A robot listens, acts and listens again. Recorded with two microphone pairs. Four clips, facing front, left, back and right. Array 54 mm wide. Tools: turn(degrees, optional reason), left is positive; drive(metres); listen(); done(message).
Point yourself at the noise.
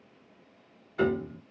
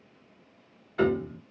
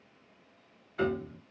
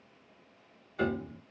turn(degrees=90, reason="The piano: 90° left.")
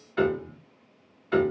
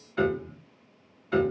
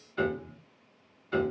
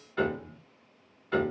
done("Found it: a piano, straight ahead, 1 to 2 m away.")